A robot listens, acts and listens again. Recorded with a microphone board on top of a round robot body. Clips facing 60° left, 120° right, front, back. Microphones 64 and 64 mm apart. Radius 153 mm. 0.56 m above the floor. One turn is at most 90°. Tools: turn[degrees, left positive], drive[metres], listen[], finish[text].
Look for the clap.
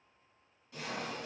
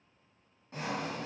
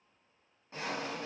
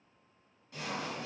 Action: listen[]
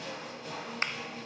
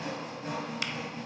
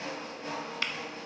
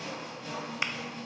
Thought: The clap: 110° left.
Action: turn[90]
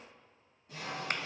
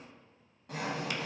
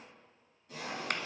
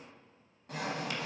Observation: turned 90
Thought: The clap is now 25° left.
Action: turn[25]
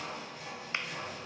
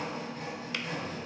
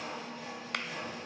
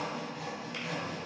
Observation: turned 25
Action: listen[]
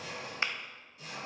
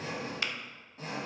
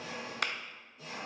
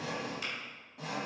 Action: finish[Found it: a clap, straight ahead.]